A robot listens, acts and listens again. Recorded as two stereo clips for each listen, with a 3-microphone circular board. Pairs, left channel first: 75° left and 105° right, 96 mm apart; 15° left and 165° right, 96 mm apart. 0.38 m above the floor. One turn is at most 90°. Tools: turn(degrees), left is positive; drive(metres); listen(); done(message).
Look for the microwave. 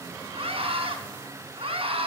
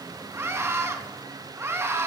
listen()
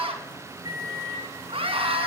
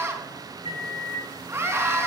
turn(degrees=-90)
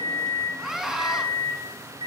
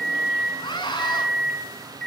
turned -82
turn(degrees=-70)
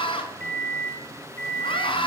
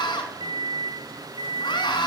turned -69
done("Found it: a microwave, straight ahead, over 4 m away.")